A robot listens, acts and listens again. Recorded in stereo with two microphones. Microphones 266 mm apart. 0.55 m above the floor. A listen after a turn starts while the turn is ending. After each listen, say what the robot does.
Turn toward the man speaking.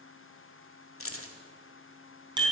Keep listening.
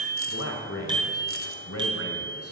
Turn 60° left.
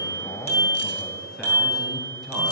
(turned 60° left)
Facing the man speaking.